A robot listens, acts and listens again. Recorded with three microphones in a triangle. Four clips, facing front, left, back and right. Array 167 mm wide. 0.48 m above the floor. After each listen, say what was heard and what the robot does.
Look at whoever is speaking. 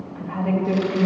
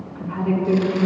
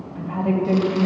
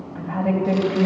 The woman speaking: 100° right. Turn 100° right.
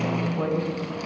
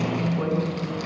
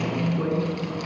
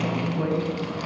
The woman speaking is now 15° right. Turn 15° right.
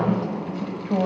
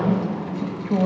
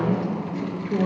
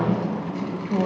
Found it: a woman speaking, straight ahead, 2 to 4 m away.